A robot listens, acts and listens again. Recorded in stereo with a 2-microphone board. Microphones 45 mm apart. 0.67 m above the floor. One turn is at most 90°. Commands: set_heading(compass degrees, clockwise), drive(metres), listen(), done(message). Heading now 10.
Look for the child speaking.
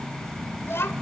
set_heading(300)
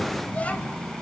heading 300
set_heading(265)
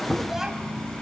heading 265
done("Facing the child speaking, 2 to 4 m away.")